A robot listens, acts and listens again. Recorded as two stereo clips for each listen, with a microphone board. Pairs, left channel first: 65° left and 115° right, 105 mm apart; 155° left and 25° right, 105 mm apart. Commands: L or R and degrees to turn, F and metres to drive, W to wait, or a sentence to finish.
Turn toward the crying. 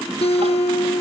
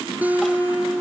W
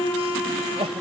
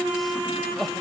R115
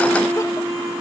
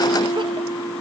W
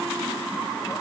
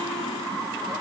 W
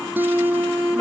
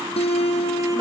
I heard crying from this way, but can't make it out now.